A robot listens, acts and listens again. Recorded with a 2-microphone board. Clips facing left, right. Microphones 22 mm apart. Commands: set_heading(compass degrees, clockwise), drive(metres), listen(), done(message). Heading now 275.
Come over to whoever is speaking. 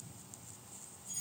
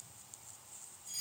listen()
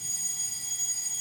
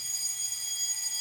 listen()
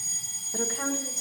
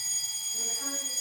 set_heading(220)
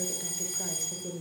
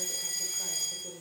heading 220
drive(1.0)
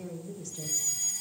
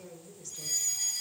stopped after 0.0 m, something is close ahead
done("Blocked. The woman speaking is further on, straight ahead.")